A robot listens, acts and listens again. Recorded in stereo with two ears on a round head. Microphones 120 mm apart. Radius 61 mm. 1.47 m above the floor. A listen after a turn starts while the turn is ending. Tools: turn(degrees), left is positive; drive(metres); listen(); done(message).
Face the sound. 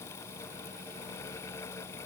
listen()
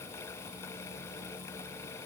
listen()
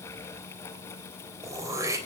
turn(degrees=-25)
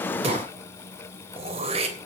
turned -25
turn(degrees=-130)
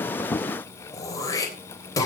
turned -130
turn(degrees=25)
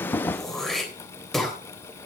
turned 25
done("Found it: throat clearing, straight ahead, 2 to 4 m away.")